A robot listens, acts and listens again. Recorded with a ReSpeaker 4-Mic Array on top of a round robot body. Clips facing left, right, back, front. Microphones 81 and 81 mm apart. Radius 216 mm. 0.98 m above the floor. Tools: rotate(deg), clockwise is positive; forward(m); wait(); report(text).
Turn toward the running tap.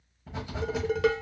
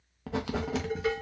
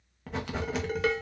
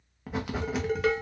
wait()
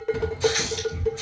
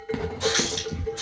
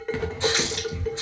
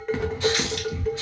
rotate(120)
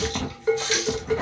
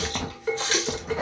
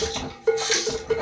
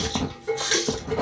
rotate(40)
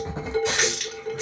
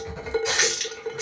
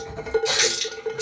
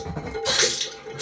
report("Facing the running tap.")